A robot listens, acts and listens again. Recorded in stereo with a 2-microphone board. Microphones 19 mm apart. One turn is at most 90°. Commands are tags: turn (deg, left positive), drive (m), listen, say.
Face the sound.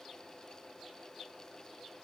<listen/>
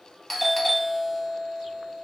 <turn deg="30"/>
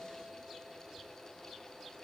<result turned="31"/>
<listen/>
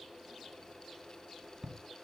<turn deg="-25"/>
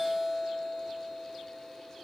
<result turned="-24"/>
<say>Facing the doorbell, under 1 m away.</say>